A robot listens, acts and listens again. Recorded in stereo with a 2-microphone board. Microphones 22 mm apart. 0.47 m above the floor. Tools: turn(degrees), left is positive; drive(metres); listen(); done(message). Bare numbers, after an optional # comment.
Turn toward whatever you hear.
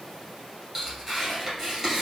turn(-30)
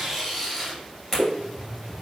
# So it is at 15° left.
turn(15)
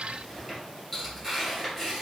done("Facing the tearing paper, 2 to 4 m away.")